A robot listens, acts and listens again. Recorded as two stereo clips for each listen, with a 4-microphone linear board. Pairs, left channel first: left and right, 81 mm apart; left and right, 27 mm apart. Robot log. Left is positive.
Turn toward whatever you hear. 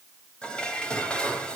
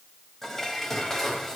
cmd yaw +30
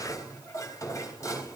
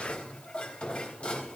note: So it is at 140° left.
cmd yaw +140
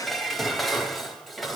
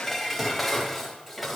end: Facing the dishes clattering.